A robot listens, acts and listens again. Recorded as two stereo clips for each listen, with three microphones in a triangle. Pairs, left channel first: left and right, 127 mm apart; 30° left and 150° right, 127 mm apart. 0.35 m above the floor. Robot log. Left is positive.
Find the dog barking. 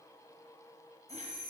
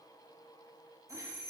cmd idle
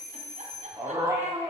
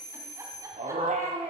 note: The dog barking: 150° right.
cmd yaw -150
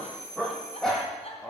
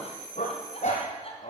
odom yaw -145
note: The dog barking is now 10° left.
cmd yaw +10
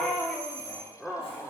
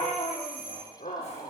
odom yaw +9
end: Found it: a dog barking, straight ahead, over 4 m away.